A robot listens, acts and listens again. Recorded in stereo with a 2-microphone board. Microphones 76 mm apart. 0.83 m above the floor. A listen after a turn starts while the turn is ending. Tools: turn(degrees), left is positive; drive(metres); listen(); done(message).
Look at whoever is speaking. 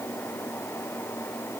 listen()
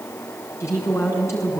turn(degrees=35)
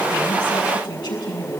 turn(degrees=115)
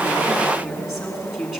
done("Facing the woman speaking, over 4 m away.")